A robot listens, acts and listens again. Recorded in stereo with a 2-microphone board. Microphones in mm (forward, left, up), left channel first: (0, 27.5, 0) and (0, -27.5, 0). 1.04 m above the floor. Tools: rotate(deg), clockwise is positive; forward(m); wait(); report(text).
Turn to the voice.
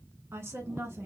rotate(55)
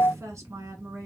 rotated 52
rotate(70)
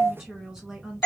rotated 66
report("Facing the woman speaking.")